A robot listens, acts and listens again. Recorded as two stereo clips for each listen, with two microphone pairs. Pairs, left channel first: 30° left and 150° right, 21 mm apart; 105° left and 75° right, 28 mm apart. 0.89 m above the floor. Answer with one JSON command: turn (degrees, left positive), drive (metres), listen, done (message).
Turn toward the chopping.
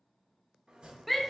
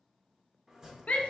{"turn": -135}
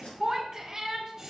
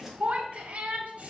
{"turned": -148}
{"turn": 10}
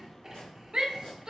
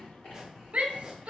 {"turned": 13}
{"done": "Found it: chopping, straight ahead."}